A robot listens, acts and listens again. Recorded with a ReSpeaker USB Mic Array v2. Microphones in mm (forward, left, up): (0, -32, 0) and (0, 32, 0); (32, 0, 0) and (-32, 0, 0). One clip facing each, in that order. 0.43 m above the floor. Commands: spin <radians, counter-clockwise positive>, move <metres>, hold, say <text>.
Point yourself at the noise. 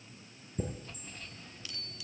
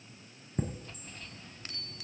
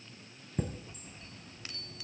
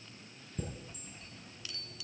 spin 0.87
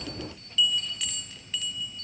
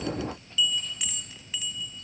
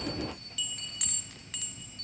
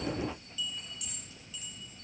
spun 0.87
spin 0.26
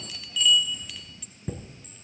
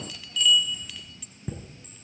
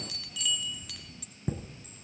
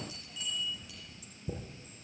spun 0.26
say Found it: a chime, straight ahead, 1 to 2 m away.